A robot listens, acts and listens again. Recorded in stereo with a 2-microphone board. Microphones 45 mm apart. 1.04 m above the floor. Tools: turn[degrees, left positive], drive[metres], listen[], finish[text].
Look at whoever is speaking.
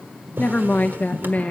Thought: The woman speaking: about 35° left or 145° left.
Action: turn[35]
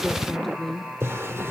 Action: finish[Found it: a woman speaking, straight ahead, under 1 m away.]